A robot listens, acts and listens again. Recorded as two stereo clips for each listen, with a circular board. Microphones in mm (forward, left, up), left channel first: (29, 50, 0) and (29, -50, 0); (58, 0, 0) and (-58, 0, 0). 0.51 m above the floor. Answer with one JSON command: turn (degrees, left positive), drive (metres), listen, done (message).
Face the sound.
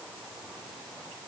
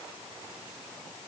{"listen": true}
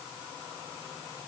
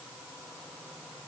{"listen": true}
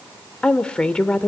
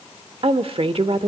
{"turn": 170}
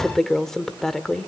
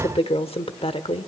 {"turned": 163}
{"done": "Found it: a woman speaking, straight ahead."}